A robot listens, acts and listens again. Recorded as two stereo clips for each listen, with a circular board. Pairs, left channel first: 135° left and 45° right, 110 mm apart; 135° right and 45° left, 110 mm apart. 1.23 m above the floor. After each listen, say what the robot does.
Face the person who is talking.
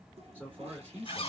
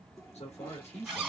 Turn 120° right.
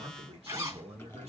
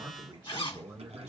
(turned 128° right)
Turn 15° right.
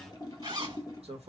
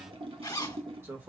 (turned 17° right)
Turn 20° right.
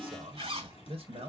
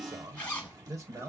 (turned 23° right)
Turn 20° right.
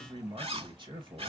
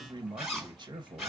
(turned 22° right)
Found it: a man speaking, straight ahead, 1 to 2 m away.